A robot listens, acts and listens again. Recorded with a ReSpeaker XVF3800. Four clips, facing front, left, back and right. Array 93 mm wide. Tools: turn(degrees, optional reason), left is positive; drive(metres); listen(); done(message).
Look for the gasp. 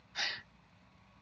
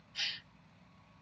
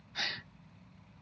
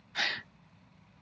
turn(degrees=-85, reason="The gasp: 85° right.")
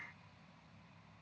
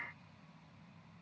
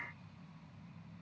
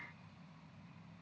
done("Facing where the gasp came from. I can't hear it now.")